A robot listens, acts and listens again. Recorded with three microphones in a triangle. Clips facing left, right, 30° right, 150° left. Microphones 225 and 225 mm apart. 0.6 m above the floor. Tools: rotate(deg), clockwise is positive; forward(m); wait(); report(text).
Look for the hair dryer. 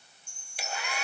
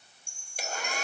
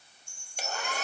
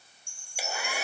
rotate(130)
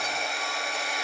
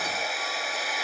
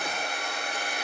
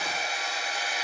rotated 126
report("Facing the hair dryer.")